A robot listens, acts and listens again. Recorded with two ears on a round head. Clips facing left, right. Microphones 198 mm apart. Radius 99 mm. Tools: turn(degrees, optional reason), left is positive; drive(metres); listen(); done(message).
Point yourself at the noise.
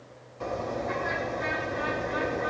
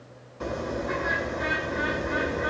turn(degrees=-30)
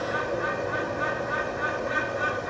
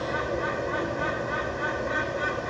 turn(degrees=15, reason="So it is at 15° left.")
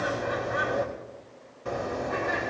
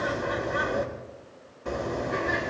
done("Facing the bird, 2 to 4 m away.")